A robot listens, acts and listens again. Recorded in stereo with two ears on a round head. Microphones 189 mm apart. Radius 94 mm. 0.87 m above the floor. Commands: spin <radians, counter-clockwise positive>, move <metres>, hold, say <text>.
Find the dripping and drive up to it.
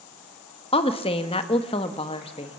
hold
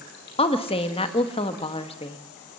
hold
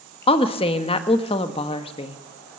say I can't make out dripping, only a woman speaking.